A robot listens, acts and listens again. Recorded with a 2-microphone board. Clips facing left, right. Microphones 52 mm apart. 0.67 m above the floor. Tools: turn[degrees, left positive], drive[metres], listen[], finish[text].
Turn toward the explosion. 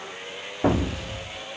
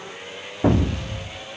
Action: turn[30]
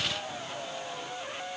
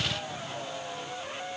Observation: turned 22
Action: listen[]
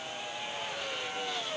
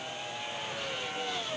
Action: finish[I heard an explosion, but can't make it out now. It was about 20° right or 155° left.]